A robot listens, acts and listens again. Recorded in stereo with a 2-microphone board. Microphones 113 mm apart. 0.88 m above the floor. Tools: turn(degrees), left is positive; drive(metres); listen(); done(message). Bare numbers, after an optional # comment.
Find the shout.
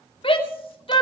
# The shout: about 50° left or 130° left.
turn(50)
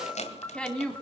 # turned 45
# So it is at 10° left.
turn(10)
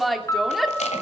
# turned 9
done("Found it: a shout, straight ahead.")